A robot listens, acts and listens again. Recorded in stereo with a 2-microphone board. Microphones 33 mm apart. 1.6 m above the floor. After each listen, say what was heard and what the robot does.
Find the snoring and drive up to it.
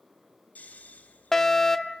The snoring: about 60° left or 120° left. Turn 60° left.
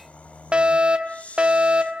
So it is at 55° left. Turn 55° left.
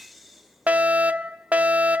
Drive 1.0 m forward.
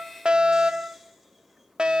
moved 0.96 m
Keep listening.
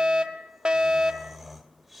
Drive 1.0 m forward.
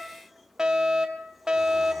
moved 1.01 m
Keep listening.
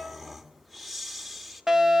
Drive 1.0 m forward.
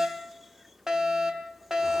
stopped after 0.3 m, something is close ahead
Keep listening.
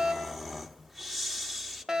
I am next to the snoring.